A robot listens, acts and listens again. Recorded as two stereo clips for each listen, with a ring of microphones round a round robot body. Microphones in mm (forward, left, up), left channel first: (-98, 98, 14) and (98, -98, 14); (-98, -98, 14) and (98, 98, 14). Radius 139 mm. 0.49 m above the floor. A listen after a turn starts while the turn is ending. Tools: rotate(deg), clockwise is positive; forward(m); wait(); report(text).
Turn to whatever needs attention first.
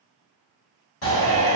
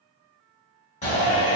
rotate(-165)
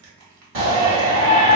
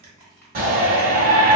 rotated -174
rotate(10)
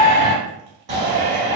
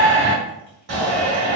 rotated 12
report("Found it: a shout, straight ahead, 1 to 2 m away.")